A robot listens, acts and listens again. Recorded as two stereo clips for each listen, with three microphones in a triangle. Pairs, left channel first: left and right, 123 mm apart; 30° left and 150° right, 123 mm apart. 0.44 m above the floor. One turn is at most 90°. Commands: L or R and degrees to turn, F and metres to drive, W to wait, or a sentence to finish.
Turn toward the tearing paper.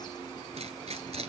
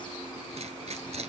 R90
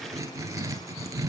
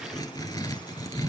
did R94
R30
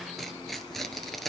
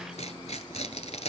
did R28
Found it: tearing paper, straight ahead, 1 to 2 m away.